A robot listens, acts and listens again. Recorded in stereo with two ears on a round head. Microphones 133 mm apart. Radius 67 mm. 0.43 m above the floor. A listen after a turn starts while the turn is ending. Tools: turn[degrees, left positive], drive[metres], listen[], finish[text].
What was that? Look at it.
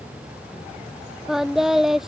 Action: turn[30]
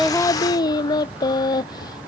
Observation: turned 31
Thought: So it is at 150° left.
Action: turn[150]
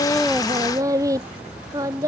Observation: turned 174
Thought: The singing is now 20° right.
Action: turn[-20]
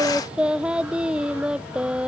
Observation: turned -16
Action: finish[Facing the singing.]